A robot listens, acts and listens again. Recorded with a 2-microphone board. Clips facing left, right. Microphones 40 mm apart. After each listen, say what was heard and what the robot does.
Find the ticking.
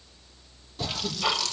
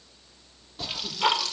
The ticking: about 45° right or 135° right. Turn 45° right.
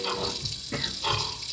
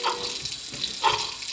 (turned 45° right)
So it is at 90° right. Turn 90° right.
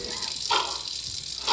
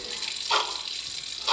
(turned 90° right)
Found it: ticking, straight ahead.